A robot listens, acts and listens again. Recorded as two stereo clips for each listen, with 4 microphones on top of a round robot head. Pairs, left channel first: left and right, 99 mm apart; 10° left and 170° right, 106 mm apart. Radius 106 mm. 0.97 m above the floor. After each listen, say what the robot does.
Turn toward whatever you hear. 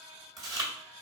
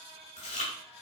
Turn 40° right.
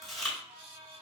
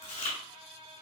Facing the chewing, 1 to 2 m away.